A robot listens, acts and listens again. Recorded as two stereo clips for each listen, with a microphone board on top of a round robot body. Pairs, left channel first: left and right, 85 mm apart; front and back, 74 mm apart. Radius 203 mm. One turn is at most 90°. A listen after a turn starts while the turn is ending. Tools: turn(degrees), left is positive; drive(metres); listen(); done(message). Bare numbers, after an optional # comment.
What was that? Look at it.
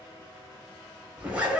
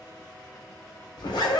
# The zipper: 15° right.
turn(-15)
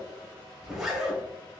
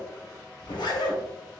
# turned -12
done("Facing the zipper.")